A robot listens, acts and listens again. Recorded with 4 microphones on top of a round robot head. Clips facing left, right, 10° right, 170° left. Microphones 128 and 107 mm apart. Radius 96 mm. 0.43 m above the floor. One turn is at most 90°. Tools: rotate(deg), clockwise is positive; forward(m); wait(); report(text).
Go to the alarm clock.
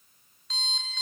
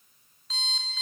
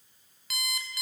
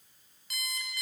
forward(1.0)
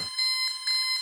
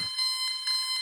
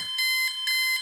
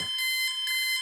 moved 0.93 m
forward(1.0)
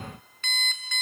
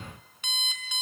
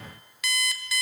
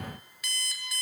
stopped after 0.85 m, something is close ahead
rotate(10)
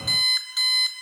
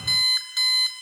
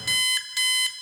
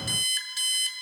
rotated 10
report("I am next to the alarm clock.")